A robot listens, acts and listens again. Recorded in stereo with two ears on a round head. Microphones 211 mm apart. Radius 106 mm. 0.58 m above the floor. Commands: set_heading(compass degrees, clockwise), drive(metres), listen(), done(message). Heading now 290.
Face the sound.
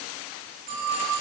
set_heading(330)
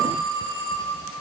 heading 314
set_heading(69)
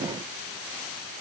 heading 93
set_heading(68)
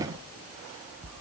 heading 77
listen()
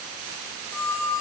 done("Found it: a phone ringing, straight ahead.")